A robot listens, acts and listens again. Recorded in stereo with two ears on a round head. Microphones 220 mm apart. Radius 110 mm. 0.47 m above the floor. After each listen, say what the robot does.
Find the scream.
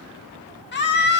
Turn 45° left.
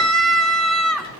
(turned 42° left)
Facing the scream.